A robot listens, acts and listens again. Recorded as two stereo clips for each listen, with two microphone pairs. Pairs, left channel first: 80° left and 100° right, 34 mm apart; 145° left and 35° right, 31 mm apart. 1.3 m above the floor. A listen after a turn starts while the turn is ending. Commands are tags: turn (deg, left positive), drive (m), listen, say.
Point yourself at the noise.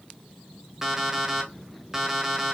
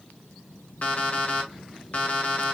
<turn deg="180"/>
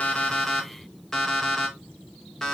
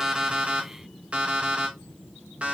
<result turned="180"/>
<say>Facing the alarm clock, under 1 m away.</say>